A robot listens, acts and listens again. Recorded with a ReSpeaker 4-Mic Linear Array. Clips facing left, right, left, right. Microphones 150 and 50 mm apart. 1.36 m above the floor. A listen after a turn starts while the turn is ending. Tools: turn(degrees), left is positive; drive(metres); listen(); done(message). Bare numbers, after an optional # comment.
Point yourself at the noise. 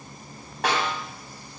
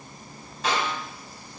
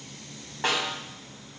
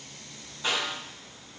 # The snare drum: about 70° left or 110° left.
turn(70)
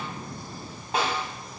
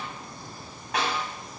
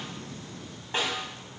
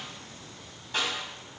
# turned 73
# So it is at 30° left.
turn(30)
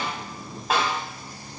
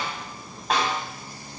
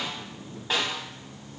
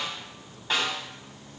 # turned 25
done("Found it: a snare drum, straight ahead.")